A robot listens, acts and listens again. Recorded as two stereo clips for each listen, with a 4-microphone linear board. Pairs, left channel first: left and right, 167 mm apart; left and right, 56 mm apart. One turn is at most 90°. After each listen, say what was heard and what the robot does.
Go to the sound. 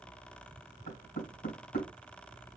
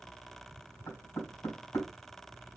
The knocking: about 75° left or 105° left. Turn 75° left.
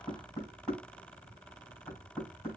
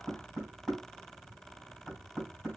Drive 1.0 m forward.
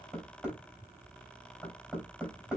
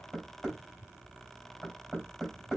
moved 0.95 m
Drive 1.0 m forward.
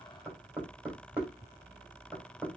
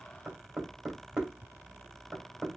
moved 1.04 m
The knocking is now 10° right. Turn 10° right.
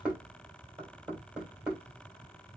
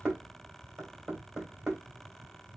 Drive 1.0 m forward.
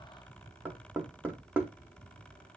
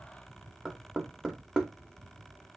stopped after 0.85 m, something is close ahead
The knocking is now 10° right. Turn 10° right.
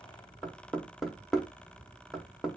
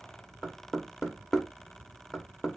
I am next to the knocking.